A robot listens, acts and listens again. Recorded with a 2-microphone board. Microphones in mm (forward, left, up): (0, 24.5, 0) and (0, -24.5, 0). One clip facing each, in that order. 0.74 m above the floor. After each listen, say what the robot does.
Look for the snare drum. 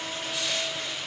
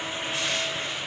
Keep listening.
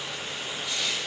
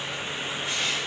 Keep listening.
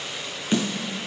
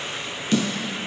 Turn 20° left.
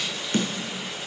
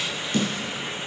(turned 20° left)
Turn 135° left.
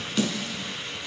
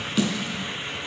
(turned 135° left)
Found it: a snare drum, straight ahead, 2 to 4 m away.